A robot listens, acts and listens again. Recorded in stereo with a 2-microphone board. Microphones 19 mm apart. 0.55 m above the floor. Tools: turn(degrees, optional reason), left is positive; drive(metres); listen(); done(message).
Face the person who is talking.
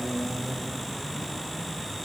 listen()
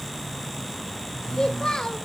turn(degrees=45, reason="The child speaking: about 45° left or 135° left.")
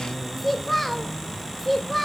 turn(degrees=10, reason="So it is at 10° left.")
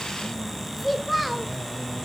done("Facing the child speaking, 1 to 2 m away.")